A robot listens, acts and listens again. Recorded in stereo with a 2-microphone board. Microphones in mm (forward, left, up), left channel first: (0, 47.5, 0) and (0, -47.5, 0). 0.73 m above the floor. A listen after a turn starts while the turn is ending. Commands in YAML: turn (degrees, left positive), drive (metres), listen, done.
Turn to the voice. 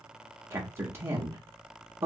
turn: -25
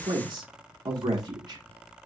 turn: -125
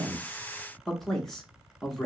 done: "Facing the man speaking, under 1 m away."